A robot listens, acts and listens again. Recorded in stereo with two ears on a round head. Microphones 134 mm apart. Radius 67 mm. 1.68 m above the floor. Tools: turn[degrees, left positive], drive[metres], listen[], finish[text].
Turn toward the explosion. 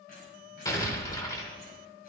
Thought: The explosion: about 20° left or 160° left.
Action: turn[20]
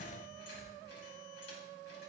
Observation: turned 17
Action: listen[]
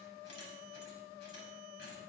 Action: finish[I heard an explosion, but can't make it out now. It was about 5° left or 140° left.]